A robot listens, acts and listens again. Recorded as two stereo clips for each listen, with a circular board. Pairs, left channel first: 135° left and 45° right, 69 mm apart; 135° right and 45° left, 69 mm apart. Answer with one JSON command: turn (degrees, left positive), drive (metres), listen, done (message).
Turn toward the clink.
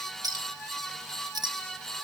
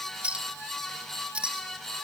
{"turn": -25}
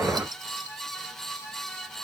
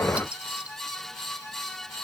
{"listen": true}
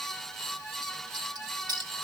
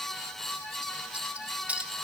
{"turn": -25}
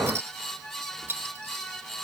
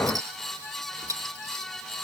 {"turn": 15}
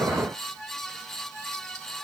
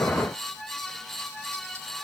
{"listen": true}
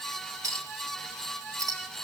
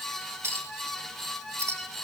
{"done": "Facing the clink."}